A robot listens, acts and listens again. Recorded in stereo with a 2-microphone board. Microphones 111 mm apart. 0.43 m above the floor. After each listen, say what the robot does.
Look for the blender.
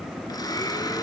Turn 35° left.
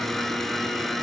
Found it: a blender, straight ahead, 1 to 2 m away.